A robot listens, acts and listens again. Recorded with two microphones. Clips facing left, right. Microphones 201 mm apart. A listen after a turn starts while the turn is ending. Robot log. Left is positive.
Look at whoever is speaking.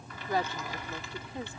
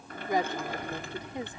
note: The woman speaking: about 15° right or 165° right.
cmd yaw -15
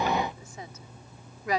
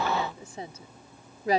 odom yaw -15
note: So it is at 150° right.
cmd yaw -150
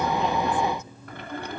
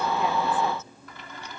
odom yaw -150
cmd idle
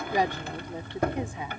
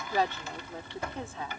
note: The woman speaking is now 15° left.
cmd yaw +15
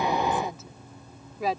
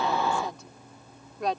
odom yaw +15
end: Facing the woman speaking.